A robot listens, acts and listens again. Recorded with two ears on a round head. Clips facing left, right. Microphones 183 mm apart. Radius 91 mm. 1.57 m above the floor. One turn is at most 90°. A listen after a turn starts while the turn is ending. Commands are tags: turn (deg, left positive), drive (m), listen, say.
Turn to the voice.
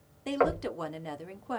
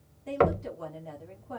<turn deg="75"/>
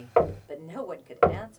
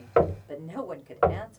<say>Facing the woman speaking, 1 to 2 m away.</say>